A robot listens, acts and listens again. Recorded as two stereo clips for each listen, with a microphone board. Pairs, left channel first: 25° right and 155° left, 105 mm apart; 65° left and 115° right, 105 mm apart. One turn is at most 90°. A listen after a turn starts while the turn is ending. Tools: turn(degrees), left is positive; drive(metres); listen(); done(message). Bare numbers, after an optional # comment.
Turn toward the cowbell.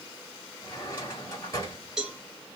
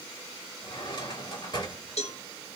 # The cowbell: 70° left.
turn(70)
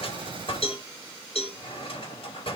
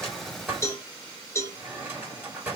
done("Found it: a cowbell, straight ahead, 1 to 2 m away.")